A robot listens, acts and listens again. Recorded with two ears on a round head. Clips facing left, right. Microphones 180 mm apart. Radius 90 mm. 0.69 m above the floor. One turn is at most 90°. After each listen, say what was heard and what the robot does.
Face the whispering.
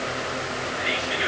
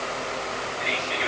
Turn 30° left.
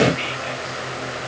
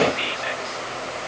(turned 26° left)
So it is at 20° right. Turn 20° right.
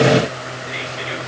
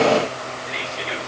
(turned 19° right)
Found it: whispering, straight ahead.